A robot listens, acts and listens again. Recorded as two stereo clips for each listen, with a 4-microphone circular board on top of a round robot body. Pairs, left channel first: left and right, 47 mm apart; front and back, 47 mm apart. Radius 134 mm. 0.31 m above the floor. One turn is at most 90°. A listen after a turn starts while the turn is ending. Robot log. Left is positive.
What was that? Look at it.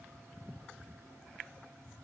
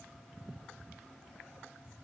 cmd idle
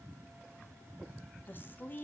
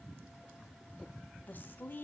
note: The woman speaking: 45° left.
cmd yaw +45
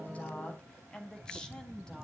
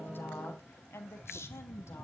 note: The woman speaking is now 15° left.
cmd yaw +15
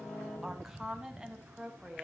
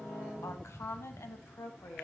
note: The woman speaking is now 15° right.
cmd yaw -15
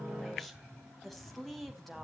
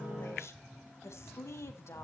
end: Found it: a woman speaking, straight ahead.